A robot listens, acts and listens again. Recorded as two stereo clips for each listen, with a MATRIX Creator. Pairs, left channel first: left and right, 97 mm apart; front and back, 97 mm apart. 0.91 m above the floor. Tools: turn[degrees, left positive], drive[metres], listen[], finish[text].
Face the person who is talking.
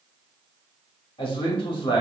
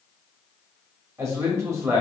Thought: The man speaking: 120° left.
Action: turn[120]
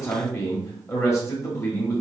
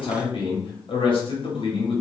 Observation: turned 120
Thought: The man speaking is now 30° left.
Action: turn[30]
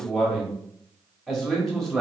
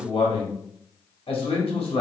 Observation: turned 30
Action: finish[Facing the man speaking, 1 to 2 m away.]